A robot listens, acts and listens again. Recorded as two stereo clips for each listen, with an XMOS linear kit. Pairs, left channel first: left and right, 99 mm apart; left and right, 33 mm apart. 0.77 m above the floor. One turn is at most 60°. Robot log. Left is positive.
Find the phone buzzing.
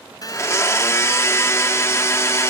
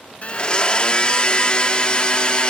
note: The phone buzzing: about 40° left or 140° left.
cmd yaw +40
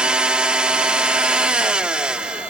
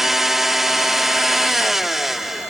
cmd idle
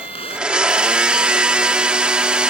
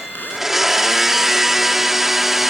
note: So it is at 100° left.
cmd yaw +60
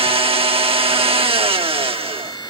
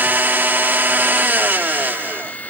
note: Nothing new. It was at 40° left.
cmd yaw +40
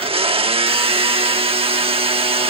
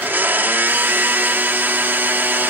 cmd idle
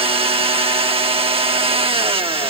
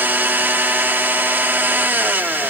end: I heard a phone buzzing from this way, but can't make it out now.